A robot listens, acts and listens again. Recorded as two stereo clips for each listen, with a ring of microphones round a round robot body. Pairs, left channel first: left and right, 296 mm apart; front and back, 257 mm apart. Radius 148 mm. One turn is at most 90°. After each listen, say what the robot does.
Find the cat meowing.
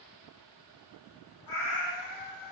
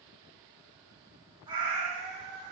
Turn 90° left.
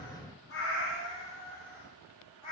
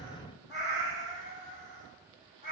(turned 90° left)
Turn 65° left.
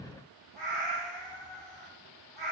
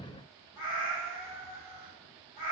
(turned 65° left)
Found it: a cat meowing, straight ahead, 2 to 4 m away.